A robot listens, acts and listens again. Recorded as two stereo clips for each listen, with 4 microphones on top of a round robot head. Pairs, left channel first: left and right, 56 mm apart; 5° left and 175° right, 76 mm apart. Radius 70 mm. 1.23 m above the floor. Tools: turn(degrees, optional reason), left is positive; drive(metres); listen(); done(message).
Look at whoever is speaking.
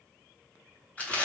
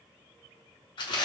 listen()
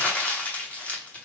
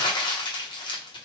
listen()
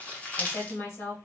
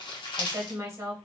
turn(degrees=130, reason="The woman speaking: 130° left.")
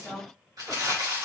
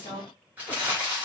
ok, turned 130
done("Facing the woman speaking, 1 to 2 m away.")